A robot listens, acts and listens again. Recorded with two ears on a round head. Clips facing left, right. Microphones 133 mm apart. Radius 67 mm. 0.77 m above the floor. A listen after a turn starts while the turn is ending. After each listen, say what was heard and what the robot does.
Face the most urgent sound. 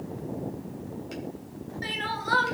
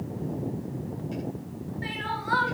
The crying: about 45° left or 135° left. Turn 45° left.
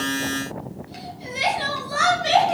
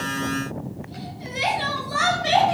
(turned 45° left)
Facing the crying, 2 to 4 m away.